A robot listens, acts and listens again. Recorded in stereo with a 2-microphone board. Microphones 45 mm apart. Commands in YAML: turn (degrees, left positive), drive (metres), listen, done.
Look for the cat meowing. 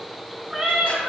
turn: -30
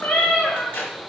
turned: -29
turn: 35
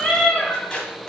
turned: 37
turn: 20
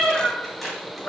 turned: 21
turn: 20
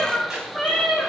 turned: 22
done: "Found it: a cat meowing, straight ahead."